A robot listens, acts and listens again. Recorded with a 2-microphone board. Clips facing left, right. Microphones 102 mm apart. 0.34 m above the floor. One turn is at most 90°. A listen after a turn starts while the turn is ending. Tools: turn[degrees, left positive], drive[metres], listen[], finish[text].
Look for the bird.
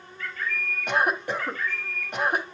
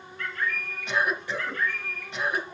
Thought: The bird: about 70° right or 110° right.
Action: turn[-70]
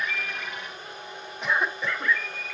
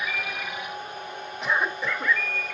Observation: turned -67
Thought: So it is at 10° right.
Action: turn[-10]
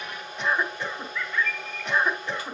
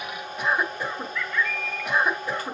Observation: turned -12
Action: finish[Found it: a bird, straight ahead.]